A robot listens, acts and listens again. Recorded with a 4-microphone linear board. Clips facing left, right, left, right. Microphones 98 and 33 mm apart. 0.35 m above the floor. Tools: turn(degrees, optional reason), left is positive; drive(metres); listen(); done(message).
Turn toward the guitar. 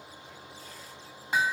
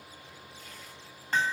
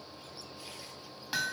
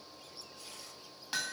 listen()
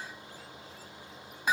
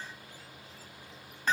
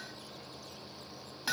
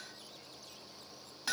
listen()
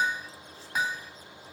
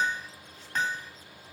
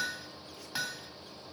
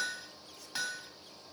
done("I can't make out a guitar to turn to.")